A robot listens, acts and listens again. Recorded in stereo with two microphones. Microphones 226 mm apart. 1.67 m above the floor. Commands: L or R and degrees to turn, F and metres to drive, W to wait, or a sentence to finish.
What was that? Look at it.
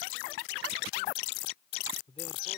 L25
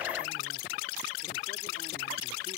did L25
W
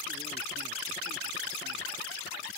W
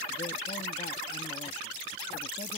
I heard a man speaking, but can't make it out now. It was about straight ahead or 130° left.